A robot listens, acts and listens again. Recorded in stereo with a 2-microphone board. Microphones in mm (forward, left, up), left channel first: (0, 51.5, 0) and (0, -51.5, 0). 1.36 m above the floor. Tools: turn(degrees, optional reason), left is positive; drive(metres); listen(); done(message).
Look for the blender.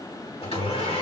turn(degrees=75, reason="The blender: about 75° left or 105° left.")
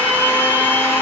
turn(degrees=20, reason="So it is at 20° left.")
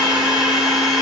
done("Facing the blender.")